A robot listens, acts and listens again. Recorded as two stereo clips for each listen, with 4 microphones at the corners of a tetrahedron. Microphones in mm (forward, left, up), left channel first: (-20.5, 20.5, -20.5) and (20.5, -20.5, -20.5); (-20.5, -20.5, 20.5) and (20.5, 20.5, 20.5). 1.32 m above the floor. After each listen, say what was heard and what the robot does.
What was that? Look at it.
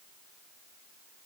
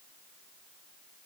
Keep listening.
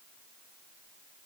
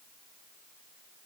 Keep listening.
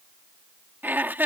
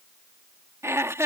The laughter: 10° left. Turn 10° left.
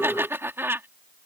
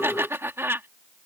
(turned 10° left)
Facing the laughter.